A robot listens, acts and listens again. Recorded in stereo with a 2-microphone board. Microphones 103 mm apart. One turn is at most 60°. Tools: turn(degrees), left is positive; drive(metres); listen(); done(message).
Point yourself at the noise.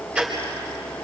turn(degrees=-30)
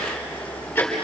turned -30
turn(degrees=20)
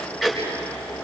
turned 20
done("Found it: ticking, straight ahead.")